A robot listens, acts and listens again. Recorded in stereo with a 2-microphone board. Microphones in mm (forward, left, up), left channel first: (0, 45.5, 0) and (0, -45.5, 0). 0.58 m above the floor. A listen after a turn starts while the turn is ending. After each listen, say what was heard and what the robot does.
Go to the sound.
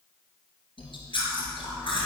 The chewing: about 65° left or 115° left. Turn 65° left.
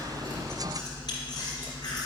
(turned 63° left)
So it is at 50° left. Turn 50° left.
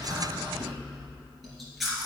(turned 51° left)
Drive 1.0 m forward.
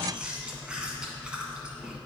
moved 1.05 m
The chewing is now 10° right. Turn 10° right.
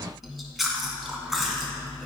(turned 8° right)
Drive 1.0 m forward.
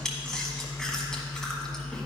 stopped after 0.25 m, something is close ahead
I am next to the chewing.